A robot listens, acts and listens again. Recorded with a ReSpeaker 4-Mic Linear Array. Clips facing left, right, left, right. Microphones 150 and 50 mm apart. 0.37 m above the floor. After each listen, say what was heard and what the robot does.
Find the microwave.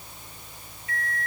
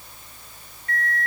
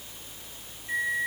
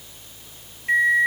The microwave: about 60° right or 120° right. Turn 60° right.
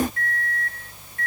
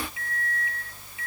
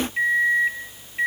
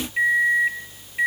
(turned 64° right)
So it is at 10° right. Turn 10° right.
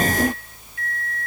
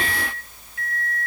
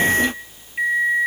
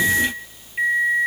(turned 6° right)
Facing the microwave.